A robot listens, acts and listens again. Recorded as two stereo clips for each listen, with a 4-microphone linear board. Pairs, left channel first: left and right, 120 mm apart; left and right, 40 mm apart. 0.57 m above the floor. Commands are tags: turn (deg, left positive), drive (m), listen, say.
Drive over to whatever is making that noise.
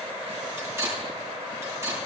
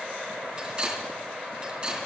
<turn deg="-25"/>
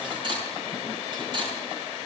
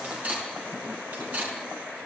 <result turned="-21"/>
<turn deg="-135"/>
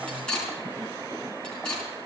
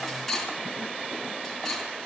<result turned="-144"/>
<turn deg="10"/>
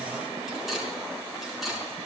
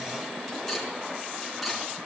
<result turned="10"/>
<drive m="1.0"/>
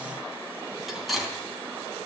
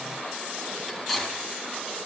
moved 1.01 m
<drive m="1.0"/>
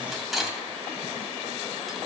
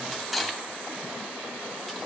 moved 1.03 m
<drive m="1.0"/>
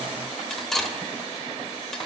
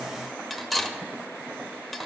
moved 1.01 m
<drive m="1.0"/>
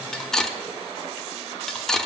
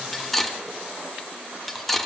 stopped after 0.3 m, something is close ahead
<say>Arrived at the cutlery clinking, straight ahead.</say>